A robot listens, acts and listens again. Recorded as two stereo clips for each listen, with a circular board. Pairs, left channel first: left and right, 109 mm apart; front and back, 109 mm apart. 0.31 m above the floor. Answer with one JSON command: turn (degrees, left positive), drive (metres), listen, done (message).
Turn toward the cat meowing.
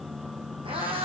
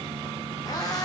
{"turn": -55}
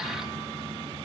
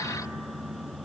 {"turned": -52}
{"listen": true}
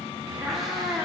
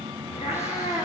{"done": "Found it: a cat meowing, straight ahead, over 4 m away."}